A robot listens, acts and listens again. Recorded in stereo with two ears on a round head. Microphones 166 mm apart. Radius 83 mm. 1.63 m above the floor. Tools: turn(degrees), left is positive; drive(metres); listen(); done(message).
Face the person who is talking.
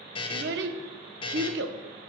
turn(degrees=-70)
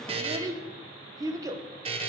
turn(degrees=-20)
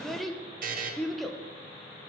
done("Found it: a child speaking, straight ahead, 1 to 2 m away.")